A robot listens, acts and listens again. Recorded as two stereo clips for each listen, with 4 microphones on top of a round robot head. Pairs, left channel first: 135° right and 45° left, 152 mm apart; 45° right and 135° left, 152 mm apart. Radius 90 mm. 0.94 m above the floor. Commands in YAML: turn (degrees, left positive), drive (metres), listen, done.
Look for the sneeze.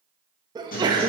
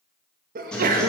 turn: 110
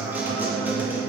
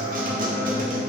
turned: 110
done: "Facing where the sneeze came from. I can't hear it now."